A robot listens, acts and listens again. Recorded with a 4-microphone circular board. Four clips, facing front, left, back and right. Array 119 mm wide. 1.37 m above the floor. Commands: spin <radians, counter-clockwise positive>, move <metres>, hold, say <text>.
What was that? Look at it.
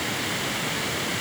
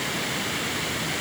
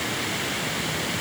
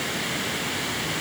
hold
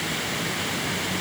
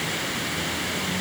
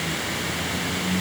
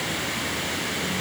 hold
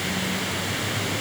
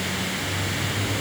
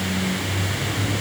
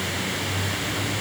say I can't make out anything.